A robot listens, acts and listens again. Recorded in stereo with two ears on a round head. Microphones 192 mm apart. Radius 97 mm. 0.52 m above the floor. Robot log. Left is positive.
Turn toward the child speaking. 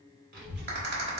note: The child speaking: about 55° right or 125° right.
cmd yaw -55
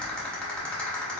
note: So it is at 45° right.
cmd yaw -45
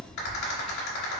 end: Found it: a child speaking, straight ahead, 1 to 2 m away.